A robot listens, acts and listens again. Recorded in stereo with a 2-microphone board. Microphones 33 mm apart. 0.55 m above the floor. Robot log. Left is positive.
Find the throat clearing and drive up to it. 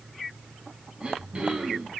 note: The throat clearing: about 35° right or 145° right.
cmd yaw -35
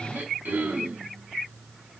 note: So it is at 105° right.
cmd yaw -105
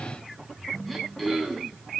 cmd fwd 1.0
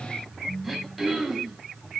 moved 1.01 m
cmd fwd 1.0
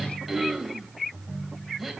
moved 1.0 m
cmd fwd 1.0
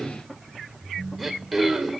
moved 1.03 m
cmd fwd 1.0
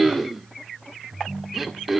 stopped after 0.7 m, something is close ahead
end: I am next to the throat clearing.